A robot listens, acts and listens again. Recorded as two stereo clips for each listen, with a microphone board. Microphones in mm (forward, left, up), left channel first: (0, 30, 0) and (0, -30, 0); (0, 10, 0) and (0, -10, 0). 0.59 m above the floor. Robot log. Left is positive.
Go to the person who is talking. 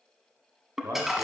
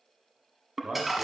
note: The man speaking: about 50° right or 130° right.
cmd yaw -50
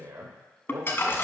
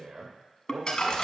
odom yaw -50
note: So it is at 75° right.
cmd yaw -75
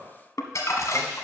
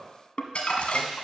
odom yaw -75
cmd idle
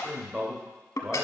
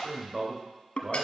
note: The man speaking is now 15° right.
cmd yaw -15
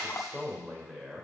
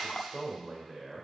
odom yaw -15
cmd fwd 1.0
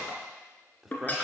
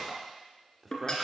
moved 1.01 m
note: The man speaking is now 10° right.
cmd yaw -10
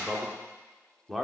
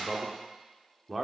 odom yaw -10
cmd fwd 1.0
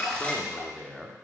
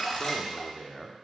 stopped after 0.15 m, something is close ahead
end: I am next to the man speaking.